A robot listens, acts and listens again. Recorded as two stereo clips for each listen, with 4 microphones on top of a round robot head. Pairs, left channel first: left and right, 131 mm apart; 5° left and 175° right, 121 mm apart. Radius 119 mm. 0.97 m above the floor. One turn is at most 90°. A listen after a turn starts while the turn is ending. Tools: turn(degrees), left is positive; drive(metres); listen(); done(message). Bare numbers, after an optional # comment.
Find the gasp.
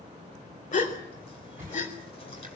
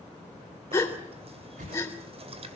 # The gasp: 70° left.
turn(70)
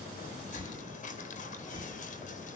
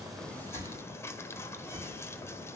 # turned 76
done("Facing where the gasp came from. I can't hear it now.")